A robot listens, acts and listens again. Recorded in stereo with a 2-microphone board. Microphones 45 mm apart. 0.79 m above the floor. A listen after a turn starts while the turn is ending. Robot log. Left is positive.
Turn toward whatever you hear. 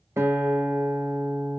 note: The guitar: about 70° right or 110° right.
cmd yaw -70
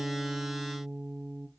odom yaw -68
note: So it is at 15° right.
cmd yaw -15
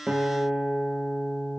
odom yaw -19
end: Found it: a guitar, straight ahead.